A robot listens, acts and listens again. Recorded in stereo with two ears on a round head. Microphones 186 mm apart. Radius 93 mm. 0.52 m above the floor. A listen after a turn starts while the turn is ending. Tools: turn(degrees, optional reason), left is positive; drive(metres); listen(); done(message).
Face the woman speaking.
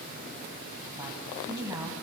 turn(degrees=-30)
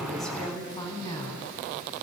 turn(degrees=20, reason="So it is at 20° left.")
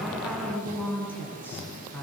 turn(degrees=10, reason="The woman speaking is now 10° left.")
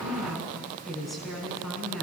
done("Facing the woman speaking, over 4 m away.")